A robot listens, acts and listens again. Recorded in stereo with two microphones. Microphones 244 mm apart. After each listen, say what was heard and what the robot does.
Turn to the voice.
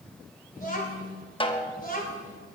The child speaking: about 35° left or 145° left. Turn 35° left.
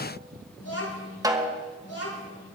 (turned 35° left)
So it is at 105° left. Turn 105° left.
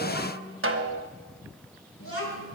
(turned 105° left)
The child speaking is now 60° left. Turn 60° left.
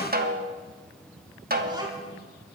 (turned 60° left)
The child speaking is now 15° right. Turn 15° right.
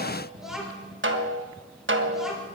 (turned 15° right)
Facing the child speaking, 2 to 4 m away.